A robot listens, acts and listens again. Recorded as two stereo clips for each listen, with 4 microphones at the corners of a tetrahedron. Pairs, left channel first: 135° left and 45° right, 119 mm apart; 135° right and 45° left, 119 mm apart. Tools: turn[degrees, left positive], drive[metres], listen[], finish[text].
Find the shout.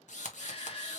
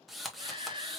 Thought: The shout: 95° left.
Action: turn[95]
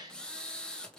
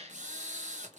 Thought: The shout is now 15° left.
Action: turn[15]
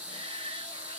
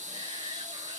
Action: listen[]
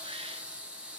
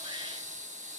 Action: listen[]
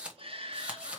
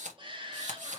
Action: finish[Found it: a shout, straight ahead, 1 to 2 m away.]